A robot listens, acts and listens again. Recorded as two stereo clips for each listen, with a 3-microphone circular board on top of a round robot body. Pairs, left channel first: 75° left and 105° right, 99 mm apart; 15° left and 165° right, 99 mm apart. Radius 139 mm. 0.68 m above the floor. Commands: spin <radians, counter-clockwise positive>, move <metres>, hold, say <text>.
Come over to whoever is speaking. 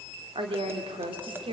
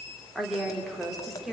spin -1.31
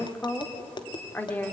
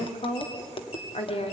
move 1.0
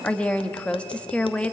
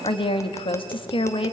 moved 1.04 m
move 1.0
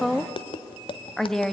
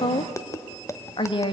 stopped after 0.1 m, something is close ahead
spin -0.17
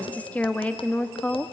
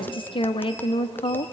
say I am next to the woman speaking.